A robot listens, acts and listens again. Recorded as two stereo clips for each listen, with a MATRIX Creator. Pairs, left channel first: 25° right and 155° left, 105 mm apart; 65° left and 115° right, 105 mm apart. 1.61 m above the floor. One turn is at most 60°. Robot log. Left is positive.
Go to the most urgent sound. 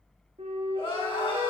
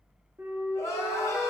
note: The crying: 10° left.
cmd yaw +10
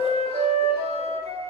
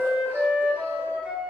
cmd idle
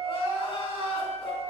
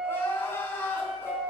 cmd fwd 1.0
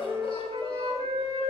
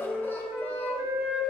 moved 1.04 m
cmd fwd 1.0
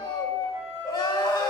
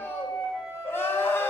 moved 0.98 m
note: The crying is now 10° left.
cmd yaw +10
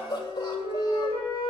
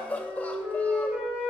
cmd fwd 1.0
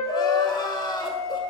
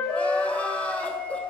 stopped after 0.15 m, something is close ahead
end: Arrived at the crying, straight ahead.